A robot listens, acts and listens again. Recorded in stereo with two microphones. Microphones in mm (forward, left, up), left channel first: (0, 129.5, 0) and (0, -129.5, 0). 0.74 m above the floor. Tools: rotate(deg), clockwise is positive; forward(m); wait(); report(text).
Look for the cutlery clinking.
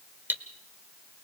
rotate(30)
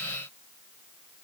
wait()
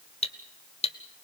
rotate(-25)
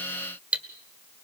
report("Found it: cutlery clinking, straight ahead, 1 to 2 m away.")